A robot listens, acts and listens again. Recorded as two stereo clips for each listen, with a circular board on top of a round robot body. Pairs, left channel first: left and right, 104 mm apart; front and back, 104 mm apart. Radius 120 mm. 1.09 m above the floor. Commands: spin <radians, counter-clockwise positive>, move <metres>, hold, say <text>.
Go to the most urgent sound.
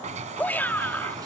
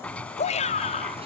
spin 0.26
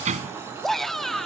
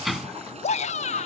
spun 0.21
move 1.0
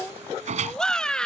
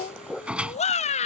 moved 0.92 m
spin 0.17
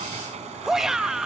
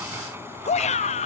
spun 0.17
move 1.0
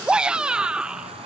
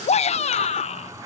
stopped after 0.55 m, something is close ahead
spin -0.17
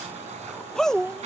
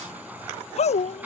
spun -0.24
say I am next to the shout.